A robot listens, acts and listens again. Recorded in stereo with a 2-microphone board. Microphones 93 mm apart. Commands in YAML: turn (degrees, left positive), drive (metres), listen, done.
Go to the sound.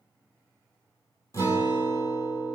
turn: 35
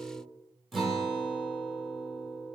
drive: 1.0
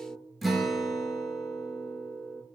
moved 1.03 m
drive: 1.0
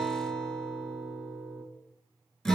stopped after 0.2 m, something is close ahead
done: "I am next to the guitar."